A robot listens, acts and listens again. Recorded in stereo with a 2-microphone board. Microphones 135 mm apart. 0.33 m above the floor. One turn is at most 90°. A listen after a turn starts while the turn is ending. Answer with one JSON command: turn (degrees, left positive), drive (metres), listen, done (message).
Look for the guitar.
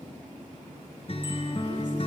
{"turn": 45}
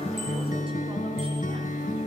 {"turn": 90}
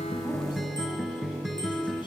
{"done": "Found it: a guitar, straight ahead."}